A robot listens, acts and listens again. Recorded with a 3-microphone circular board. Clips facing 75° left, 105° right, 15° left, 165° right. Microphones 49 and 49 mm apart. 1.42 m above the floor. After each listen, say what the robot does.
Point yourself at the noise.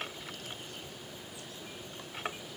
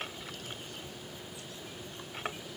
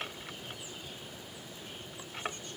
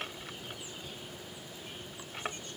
Keep listening.
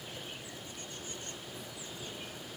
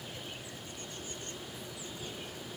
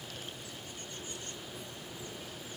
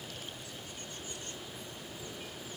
Keep listening.
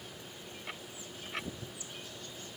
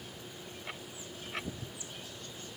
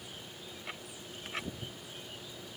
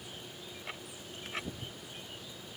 I can't make out anything to turn to.